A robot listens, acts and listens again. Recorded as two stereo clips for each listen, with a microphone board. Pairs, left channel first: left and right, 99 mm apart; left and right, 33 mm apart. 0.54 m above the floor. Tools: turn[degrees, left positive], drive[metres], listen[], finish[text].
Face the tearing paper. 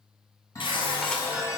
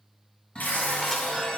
Thought: The tearing paper: about 60° left or 120° left.
Action: turn[60]
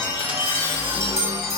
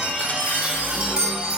Action: listen[]
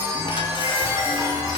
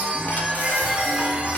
Action: listen[]
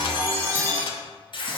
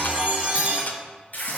Thought: So it is at 55° left.
Action: turn[55]
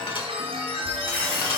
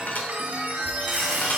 Action: listen[]
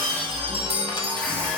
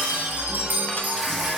Action: listen[]
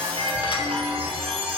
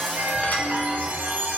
Action: finish[Facing where the tearing paper came from. I can't hear it now.]